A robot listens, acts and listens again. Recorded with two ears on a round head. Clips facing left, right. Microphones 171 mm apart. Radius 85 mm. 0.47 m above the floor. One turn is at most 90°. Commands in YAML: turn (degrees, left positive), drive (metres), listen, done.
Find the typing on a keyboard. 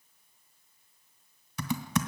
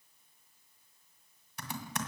turn: 65
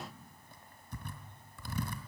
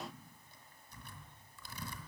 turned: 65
turn: 50
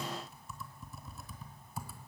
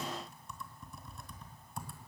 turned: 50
done: "Found it: typing on a keyboard, straight ahead."